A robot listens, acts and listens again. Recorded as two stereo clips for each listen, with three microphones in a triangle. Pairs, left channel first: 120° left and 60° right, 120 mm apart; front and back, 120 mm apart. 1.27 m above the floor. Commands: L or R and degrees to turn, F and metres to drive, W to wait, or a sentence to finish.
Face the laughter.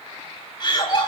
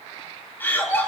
L70
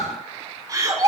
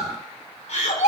Found it: laughter, straight ahead.